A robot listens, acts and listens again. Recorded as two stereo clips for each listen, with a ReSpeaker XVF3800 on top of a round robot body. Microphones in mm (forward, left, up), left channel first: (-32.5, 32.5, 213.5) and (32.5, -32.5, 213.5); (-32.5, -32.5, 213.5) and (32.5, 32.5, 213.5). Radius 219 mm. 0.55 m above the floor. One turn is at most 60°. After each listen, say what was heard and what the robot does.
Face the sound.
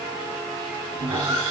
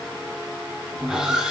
The sawing: 40° right. Turn 40° right.
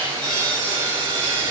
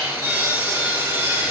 The sawing is now 25° right. Turn 25° right.
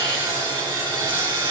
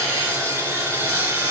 The sawing is now 15° right. Turn 15° right.
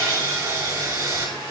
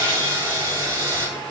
Found it: sawing, straight ahead, 2 to 4 m away.